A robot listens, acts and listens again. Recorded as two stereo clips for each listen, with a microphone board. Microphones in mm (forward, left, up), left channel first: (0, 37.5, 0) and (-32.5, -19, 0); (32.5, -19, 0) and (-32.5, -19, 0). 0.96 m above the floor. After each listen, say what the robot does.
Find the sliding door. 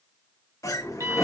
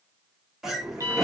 Turn 100° left.
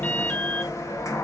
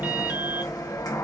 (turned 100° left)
Turn 20° left.
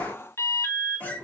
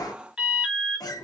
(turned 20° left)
Found it: a sliding door, straight ahead, 1 to 2 m away.